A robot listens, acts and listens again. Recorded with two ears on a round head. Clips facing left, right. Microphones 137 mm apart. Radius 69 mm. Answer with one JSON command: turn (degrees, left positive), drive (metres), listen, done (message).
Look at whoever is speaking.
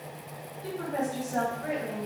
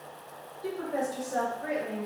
{"turn": -60}
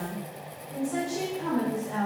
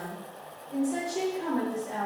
{"turn": -25}
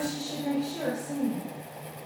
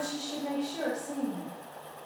{"done": "Found it: a woman speaking, straight ahead."}